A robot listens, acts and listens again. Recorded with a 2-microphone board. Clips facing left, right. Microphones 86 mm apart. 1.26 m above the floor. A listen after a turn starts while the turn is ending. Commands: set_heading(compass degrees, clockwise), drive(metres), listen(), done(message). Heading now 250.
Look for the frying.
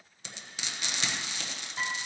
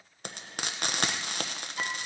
set_heading(300)
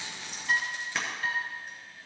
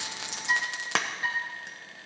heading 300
set_heading(20)
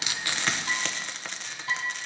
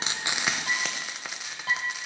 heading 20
done("Facing the frying.")